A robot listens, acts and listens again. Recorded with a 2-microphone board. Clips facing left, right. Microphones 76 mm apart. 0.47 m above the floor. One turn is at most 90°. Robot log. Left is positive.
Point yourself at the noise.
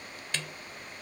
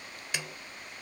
cmd yaw -30
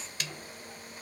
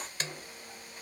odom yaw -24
note: So it is at 140° right.
cmd yaw -90
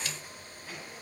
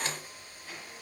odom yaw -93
note: Nothing new. It was at 45° right.
cmd yaw -45
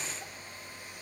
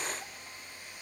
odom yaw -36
note: Nothing new. It was at 10° right.
cmd yaw -10
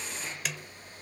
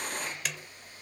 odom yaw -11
end: Facing the snare drum.